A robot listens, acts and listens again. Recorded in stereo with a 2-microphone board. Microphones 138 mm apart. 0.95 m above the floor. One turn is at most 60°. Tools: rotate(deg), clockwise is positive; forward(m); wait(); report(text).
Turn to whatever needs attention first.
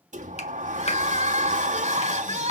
rotate(55)
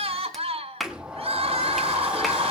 rotate(55)
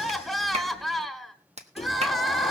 report("Facing the crying.")